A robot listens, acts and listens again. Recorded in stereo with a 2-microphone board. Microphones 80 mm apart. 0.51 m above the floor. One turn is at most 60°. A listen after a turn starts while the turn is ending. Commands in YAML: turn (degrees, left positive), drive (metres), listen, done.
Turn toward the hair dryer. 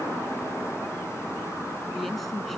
listen: true
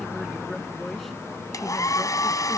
turn: 50
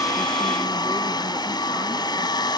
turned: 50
turn: 60
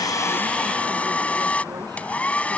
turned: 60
turn: 20
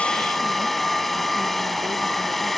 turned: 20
done: "Facing the hair dryer."